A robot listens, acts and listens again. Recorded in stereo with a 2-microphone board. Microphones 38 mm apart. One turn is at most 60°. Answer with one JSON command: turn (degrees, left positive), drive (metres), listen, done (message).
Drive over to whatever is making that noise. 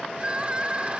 {"turn": -30}
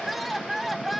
{"drive": 1.0}
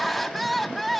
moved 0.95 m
{"drive": 1.0}
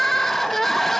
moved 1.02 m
{"turn": 10}
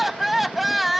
{"drive": 1.0}
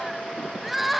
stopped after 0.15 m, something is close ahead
{"done": "Arrived at the crying, straight ahead."}